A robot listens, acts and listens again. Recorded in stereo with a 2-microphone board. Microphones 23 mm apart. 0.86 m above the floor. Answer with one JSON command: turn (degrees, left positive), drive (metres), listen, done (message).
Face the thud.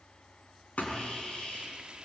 {"turn": 90}
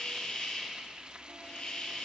{"done": "I heard a thud from this way, but can't make it out now."}